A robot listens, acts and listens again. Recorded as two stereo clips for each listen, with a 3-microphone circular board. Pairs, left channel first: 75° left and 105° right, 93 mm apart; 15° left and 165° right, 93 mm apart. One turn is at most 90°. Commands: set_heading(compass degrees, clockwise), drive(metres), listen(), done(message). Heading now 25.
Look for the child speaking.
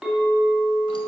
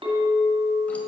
listen()
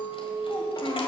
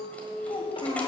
set_heading(350)
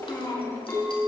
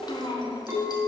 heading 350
set_heading(335)
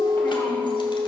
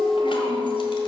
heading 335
listen()
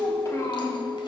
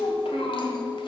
set_heading(310)
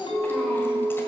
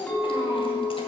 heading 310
done("Facing the child speaking, 2 to 4 m away.")